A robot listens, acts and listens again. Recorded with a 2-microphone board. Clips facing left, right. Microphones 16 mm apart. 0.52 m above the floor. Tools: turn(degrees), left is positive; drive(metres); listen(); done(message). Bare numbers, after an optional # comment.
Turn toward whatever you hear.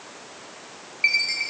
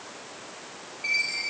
# The chime: about 65° left or 115° left.
turn(65)
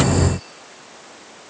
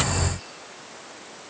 listen()
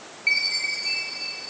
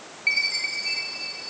done("Found it: a chime, straight ahead, over 4 m away.")